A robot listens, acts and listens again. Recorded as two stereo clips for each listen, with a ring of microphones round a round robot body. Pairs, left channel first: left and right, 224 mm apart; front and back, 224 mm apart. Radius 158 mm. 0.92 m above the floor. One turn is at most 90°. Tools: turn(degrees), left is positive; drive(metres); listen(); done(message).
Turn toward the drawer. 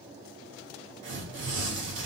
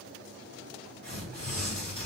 listen()
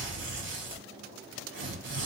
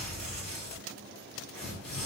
listen()
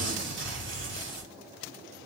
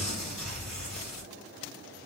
done("I can't make out a drawer, only tearing paper.")